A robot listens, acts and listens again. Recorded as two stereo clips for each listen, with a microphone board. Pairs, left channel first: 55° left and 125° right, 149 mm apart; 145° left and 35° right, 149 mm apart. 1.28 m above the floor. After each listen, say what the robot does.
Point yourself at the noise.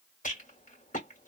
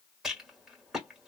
Turn 55° left.
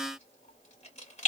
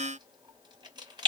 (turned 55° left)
Turn 20° left.
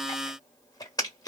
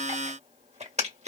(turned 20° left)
Facing the rattle.